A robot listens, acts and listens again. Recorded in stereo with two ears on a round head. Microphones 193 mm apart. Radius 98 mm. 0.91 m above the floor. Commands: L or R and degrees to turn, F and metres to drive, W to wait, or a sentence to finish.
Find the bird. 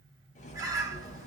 R15
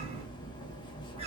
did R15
R150
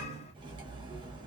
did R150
L30
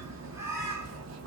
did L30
R15
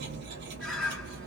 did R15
Facing the bird.